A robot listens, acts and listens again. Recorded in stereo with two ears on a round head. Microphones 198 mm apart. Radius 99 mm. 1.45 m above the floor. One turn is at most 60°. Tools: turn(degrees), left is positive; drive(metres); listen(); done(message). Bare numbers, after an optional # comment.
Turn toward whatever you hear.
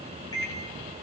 # The microwave: about 15° left or 165° left.
turn(15)
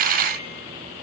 listen()
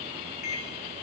# So it is at 150° left.
turn(60)
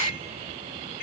# The microwave is now 100° left.
turn(60)
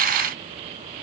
# Nothing new. It was at 40° left.
turn(40)
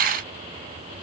listen()
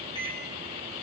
# The microwave is now 20° left.
turn(20)
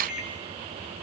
done("Found it: a microwave, straight ahead.")